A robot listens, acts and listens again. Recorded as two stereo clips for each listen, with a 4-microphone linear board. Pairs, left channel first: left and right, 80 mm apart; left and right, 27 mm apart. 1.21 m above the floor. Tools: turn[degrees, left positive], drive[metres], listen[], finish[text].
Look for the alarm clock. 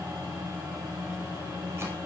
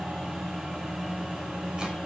Action: listen[]
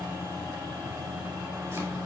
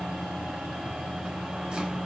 Action: listen[]
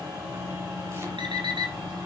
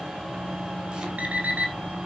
Thought: The alarm clock: about 70° right or 110° right.
Action: turn[-70]
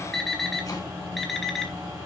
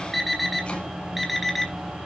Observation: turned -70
Action: finish[Found it: an alarm clock, straight ahead.]